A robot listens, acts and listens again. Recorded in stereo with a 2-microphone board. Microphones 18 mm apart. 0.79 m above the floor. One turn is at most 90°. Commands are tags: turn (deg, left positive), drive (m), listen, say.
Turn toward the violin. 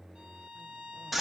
<turn deg="-90"/>
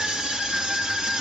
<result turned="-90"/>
<listen/>
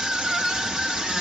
<listen/>
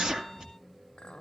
<say>I heard a violin from this way, but can't make it out now.</say>